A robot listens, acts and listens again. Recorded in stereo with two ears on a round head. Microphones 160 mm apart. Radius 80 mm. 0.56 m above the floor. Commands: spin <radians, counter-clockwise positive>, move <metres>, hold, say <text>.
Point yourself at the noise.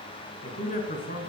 spin 0.79
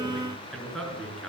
say Facing the man speaking.